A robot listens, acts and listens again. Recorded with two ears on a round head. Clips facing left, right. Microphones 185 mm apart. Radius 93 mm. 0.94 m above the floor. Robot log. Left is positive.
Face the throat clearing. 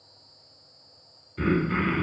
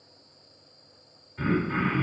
note: The throat clearing: about 40° left or 140° left.
cmd yaw +40
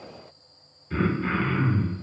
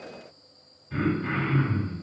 note: So it is at 100° left.
cmd yaw +100
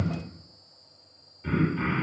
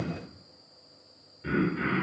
note: The throat clearing is now 15° right.
cmd yaw -15
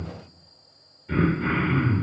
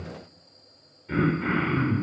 end: Facing the throat clearing.